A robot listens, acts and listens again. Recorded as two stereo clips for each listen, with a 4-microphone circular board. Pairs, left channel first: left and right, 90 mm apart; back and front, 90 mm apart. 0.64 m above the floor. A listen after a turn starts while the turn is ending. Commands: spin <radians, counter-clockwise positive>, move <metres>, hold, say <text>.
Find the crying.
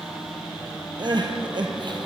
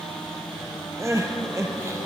spin -0.96
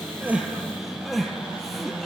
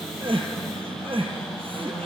say Facing the crying.